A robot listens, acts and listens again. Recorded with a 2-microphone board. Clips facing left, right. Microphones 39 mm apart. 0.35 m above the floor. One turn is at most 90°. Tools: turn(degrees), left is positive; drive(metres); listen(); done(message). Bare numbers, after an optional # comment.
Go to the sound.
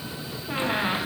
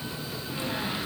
# The squeak: about 40° left or 140° left.
turn(40)
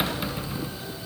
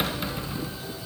drive(1.0)
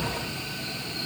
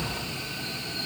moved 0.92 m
drive(1.0)
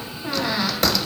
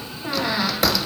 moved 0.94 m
drive(1.0)
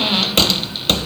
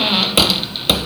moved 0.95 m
# The squeak is now 15° right.
turn(-15)
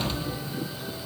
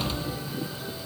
drive(1.0)
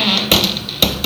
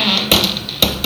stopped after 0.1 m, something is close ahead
done("I am next to the squeak.")